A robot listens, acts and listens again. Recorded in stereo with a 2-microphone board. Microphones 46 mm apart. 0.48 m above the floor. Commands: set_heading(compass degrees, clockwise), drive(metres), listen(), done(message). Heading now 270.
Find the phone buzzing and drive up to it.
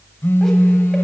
set_heading(210)
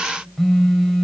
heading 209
drive(1.0)
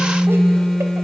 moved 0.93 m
set_heading(199)
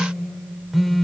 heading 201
drive(1.0)
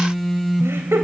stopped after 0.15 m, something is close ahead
done("Arrived at the phone buzzing, straight ahead.")